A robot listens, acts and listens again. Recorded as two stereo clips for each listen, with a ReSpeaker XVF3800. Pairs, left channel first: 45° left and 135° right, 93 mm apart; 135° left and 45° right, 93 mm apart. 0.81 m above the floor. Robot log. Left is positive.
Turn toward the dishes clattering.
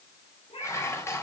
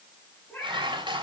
note: The dishes clattering: 15° right.
cmd yaw -15
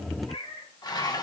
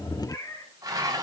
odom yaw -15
end: Facing the dishes clattering.